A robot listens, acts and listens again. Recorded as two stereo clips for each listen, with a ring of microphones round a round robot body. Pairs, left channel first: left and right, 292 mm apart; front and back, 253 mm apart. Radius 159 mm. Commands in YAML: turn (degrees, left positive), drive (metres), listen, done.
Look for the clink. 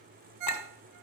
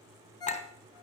turn: 65
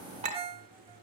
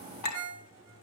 turn: -20
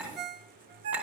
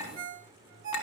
done: "Facing the clink."